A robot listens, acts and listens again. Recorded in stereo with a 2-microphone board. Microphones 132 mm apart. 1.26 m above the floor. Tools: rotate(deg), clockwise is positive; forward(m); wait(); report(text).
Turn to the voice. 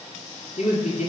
rotate(-55)
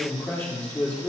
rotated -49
rotate(-10)
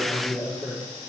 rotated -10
report("Facing the man speaking, 2 to 4 m away.")